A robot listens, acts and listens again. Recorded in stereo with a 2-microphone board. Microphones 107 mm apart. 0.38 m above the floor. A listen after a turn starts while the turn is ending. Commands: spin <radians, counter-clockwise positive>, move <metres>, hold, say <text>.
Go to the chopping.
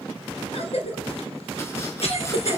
hold
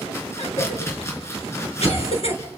spin 0.44
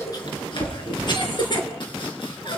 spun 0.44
spin 2.27
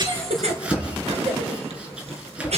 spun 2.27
spin -0.17
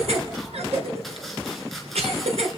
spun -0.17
move 1.0
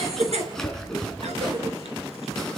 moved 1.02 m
move 1.0
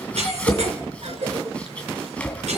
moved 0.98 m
spin 0.17
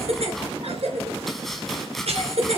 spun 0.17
move 1.0
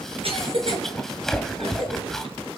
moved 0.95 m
move 1.0
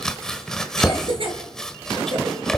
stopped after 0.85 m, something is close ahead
say Arrived at the chopping, straight ahead.